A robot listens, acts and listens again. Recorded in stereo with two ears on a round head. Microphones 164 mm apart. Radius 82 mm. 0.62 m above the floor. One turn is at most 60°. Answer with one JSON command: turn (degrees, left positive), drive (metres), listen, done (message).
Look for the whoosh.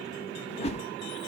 {"turn": 35}
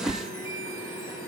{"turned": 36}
{"done": "Found it: a whoosh, straight ahead, under 1 m away."}